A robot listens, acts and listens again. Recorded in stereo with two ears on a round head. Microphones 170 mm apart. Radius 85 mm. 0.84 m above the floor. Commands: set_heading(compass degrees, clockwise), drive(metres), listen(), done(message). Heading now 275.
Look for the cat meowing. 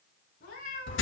set_heading(230)
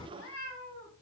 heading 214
set_heading(134)
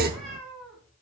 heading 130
done("Found it: a cat meowing, straight ahead, 2 to 4 m away.")